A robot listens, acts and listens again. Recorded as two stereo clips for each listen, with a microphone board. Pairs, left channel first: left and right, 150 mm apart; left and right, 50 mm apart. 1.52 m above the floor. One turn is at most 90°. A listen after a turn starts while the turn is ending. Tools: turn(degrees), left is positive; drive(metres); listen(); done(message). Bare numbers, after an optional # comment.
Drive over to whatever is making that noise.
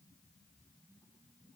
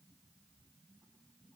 listen()
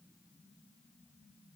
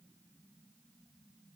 listen()
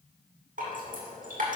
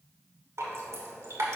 # The dripping: about 70° right or 110° right.
turn(-70)
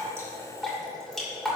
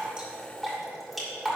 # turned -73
drive(1.0)
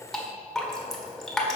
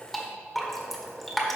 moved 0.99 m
drive(1.0)
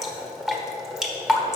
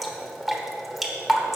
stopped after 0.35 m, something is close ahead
done("I am next to the dripping.")